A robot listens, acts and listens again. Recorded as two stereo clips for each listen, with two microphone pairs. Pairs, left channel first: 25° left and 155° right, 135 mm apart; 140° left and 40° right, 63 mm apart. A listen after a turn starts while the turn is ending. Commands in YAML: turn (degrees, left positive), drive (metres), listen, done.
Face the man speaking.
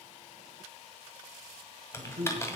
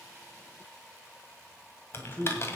turn: -155
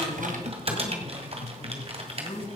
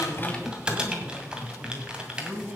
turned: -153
done: "Facing the man speaking, 2 to 4 m away."